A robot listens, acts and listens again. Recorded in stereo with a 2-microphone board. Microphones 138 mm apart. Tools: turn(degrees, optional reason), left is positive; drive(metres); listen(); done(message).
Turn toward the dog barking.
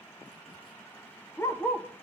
turn(degrees=20, reason="The dog barking: about 20° left or 160° left.")
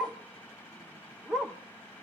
done("Facing the dog barking.")